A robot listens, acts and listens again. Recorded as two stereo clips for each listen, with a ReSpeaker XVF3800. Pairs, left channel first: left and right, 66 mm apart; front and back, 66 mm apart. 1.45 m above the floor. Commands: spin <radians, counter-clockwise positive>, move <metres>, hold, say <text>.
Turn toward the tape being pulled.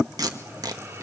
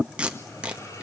spin -1.83
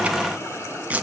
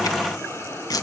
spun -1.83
spin -0.35
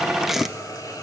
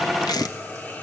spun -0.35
say Facing the tape being pulled, 1 to 2 m away.